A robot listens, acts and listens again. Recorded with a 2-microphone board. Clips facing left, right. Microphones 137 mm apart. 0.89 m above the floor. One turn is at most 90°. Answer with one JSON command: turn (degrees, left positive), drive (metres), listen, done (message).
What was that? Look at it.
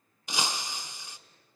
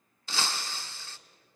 {"turn": 15}
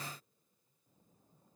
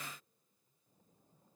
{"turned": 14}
{"listen": true}
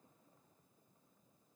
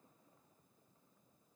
{"done": "I heard breaking glass, but can't make it out now. It was about straight ahead or 150° left."}